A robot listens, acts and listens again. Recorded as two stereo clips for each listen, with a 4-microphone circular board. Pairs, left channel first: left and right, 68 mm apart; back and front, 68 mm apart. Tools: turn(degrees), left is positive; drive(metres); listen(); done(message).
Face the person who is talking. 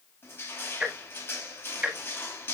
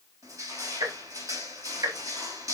listen()
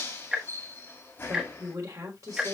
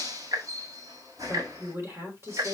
turn(degrees=-50)
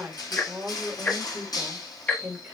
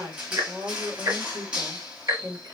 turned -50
turn(degrees=-10)
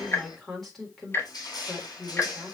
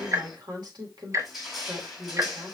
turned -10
done("Facing the woman speaking, 2 to 4 m away.")